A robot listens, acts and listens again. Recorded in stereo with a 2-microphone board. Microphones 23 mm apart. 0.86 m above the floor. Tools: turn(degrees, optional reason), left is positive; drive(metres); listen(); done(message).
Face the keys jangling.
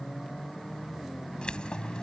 turn(degrees=50, reason="The keys jangling: about 50° left or 130° left.")
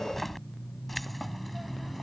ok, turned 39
done("Found it: keys jangling, straight ahead.")